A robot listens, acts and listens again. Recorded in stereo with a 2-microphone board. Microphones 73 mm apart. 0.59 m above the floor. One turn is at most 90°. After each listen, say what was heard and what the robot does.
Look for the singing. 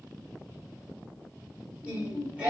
The singing: about 20° right or 160° right. Turn 20° right.
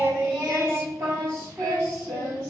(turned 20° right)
So it is at 135° right. Turn 90° right.
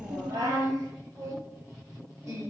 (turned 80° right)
The singing is now 45° right. Turn 45° right.
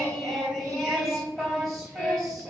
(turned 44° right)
Found it: singing, straight ahead.